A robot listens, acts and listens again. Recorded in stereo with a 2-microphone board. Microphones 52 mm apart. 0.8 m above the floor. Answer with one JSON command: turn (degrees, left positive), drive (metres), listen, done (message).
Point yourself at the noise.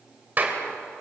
{"turn": -35}
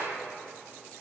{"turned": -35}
{"listen": true}
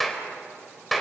{"done": "Found it: a clap, straight ahead."}